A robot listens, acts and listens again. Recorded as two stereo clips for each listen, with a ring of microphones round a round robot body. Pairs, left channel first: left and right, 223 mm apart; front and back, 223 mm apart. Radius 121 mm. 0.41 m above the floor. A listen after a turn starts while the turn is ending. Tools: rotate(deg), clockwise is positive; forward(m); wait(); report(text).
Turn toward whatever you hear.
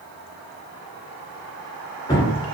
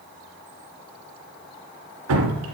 rotate(-165)
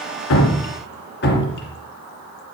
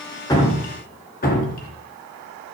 rotate(-50)
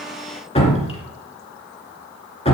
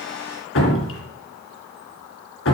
rotate(-25)
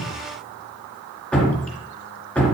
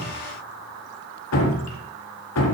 report("Facing the dripping, 2 to 4 m away.")